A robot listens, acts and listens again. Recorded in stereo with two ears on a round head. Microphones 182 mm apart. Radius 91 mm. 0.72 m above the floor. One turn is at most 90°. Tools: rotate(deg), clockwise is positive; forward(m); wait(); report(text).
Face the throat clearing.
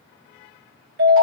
wait()
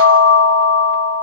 wait()
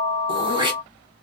rotate(25)
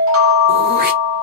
wait()
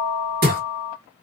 rotate(90)
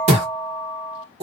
rotate(35)
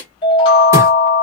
wait()
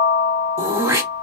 rotate(15)
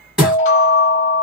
report("Found it: throat clearing, straight ahead, 1 to 2 m away.")